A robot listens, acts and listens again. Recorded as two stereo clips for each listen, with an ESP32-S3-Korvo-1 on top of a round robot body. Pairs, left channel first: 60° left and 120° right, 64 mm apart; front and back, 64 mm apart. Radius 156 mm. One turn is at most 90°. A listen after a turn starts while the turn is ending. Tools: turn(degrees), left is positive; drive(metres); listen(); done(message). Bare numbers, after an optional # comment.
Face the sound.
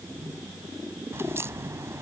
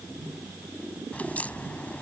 # The crack: 70° right.
turn(-70)
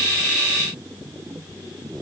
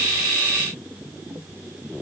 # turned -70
done("I heard a crack from this way, but can't make it out now.")